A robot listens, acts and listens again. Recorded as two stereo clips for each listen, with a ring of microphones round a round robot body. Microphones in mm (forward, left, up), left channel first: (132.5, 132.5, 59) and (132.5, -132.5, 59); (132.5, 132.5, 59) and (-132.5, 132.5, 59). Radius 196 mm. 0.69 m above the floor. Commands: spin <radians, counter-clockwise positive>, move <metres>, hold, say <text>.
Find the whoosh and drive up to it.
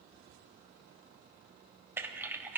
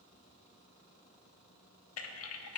hold
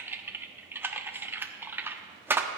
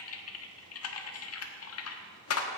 hold
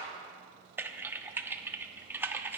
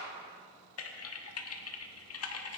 say I can't make out a whoosh, only typing on a keyboard.